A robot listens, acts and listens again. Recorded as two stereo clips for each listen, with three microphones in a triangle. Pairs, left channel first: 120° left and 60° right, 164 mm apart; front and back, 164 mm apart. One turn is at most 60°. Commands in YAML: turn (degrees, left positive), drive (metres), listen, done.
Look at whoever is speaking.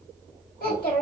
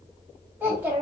turn: 60
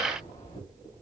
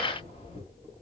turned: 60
turn: 50
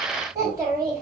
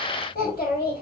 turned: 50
turn: 10
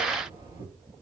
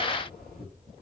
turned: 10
done: "Found it: a child speaking, straight ahead."